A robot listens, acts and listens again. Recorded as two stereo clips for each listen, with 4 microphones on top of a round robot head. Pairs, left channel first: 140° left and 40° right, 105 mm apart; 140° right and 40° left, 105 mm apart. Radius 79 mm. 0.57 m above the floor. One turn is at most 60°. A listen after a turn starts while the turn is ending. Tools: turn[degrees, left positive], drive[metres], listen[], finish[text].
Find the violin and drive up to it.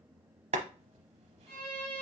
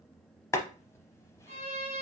Thought: The violin: 60° left.
Action: turn[60]
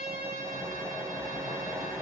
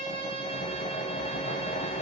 Action: listen[]
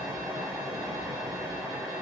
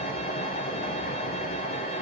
Action: listen[]
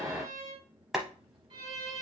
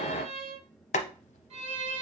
Action: drive[1.0]
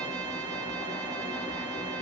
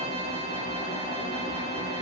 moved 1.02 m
Action: listen[]
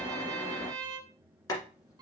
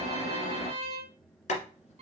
Thought: The violin is now 10° left.
Action: turn[10]
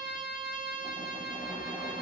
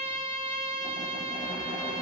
Action: drive[1.0]
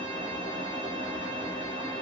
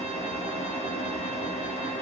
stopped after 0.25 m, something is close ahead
Action: listen[]
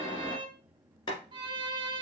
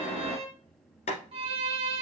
Action: finish[Arrived at the violin, straight ahead.]